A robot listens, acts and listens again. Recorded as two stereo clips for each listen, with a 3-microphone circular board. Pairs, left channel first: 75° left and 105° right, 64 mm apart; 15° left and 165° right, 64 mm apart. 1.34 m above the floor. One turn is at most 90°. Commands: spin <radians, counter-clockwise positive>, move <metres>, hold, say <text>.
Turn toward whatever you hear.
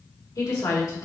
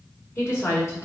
spin 1.13
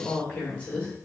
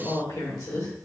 say Found it: a woman speaking, straight ahead.